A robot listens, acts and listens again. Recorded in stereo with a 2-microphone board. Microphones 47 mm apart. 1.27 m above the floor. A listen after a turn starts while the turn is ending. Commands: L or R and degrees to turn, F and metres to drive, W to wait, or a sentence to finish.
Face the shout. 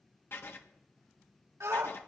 R90
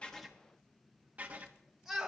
Found it: a shout, straight ahead.